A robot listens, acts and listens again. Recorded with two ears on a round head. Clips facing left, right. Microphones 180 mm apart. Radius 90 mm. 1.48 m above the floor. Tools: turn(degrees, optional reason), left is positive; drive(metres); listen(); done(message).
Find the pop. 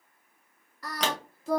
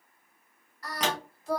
turn(degrees=55, reason="The pop: about 55° left or 125° left.")
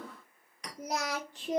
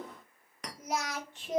listen()
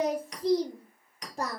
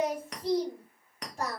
done("I heard a pop, but can't make it out now. It was about straight ahead or 70° left.")